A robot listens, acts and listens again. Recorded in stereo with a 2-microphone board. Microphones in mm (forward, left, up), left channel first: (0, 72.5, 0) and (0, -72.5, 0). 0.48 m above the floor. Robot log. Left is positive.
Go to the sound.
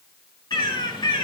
note: The bird: about 30° left or 150° left.
cmd yaw +30
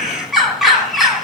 cmd fwd 1.0
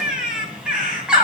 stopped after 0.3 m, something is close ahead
end: Something is in my way. I am facing the bird but have not reached it.